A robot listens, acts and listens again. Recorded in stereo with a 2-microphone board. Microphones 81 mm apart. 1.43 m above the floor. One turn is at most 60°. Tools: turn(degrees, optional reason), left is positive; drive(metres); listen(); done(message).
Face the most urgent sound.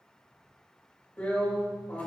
listen()
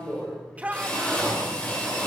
turn(degrees=-20, reason="The shout: about 20° right or 160° right.")
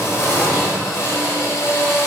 listen()
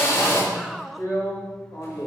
done("Facing the shout, 1 to 2 m away.")